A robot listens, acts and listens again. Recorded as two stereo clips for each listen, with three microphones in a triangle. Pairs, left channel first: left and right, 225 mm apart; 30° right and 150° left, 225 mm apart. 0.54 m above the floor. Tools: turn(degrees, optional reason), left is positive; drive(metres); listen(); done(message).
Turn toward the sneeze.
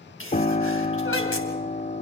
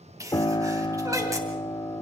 turn(degrees=75, reason="The sneeze: 75° left.")
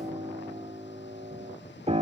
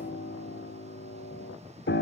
done("Facing where the sneeze came from. I can't hear it now.")